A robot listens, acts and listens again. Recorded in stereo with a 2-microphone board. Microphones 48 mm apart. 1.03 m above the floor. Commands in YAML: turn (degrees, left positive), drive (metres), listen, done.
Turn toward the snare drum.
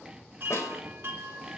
turn: 75
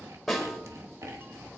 done: "Found it: a snare drum, straight ahead, 2 to 4 m away."